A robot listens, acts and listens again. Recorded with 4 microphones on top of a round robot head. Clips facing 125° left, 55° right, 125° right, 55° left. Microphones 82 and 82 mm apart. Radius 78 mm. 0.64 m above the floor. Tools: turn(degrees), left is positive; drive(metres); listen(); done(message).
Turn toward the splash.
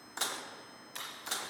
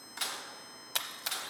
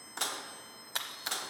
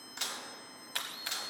turn(degrees=-55)
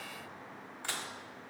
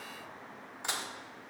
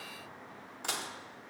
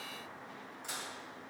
done("Facing where the splash came from. I can't hear it now.")